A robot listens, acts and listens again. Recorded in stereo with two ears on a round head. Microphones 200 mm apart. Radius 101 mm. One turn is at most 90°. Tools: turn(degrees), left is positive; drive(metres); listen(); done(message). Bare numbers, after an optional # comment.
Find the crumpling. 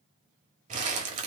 # The crumpling: about 35° right or 145° right.
turn(-35)
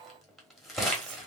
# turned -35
done("Facing the crumpling, 1 to 2 m away.")